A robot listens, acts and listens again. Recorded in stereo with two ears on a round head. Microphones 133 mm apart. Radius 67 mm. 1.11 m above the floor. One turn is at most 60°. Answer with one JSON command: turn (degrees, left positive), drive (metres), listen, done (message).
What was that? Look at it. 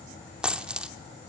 {"turn": -30}
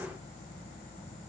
{"listen": true}
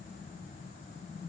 {"done": "I heard a dropped coin, but can't make it out now. It was about 25° left or 145° right."}